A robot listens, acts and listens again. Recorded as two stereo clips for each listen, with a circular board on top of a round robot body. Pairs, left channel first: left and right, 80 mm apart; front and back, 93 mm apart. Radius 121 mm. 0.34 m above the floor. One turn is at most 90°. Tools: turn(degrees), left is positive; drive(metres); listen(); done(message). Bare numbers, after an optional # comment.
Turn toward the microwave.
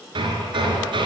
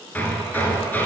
listen()
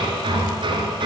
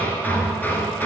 listen()
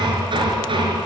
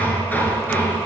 done("I can't make out a microwave to turn to.")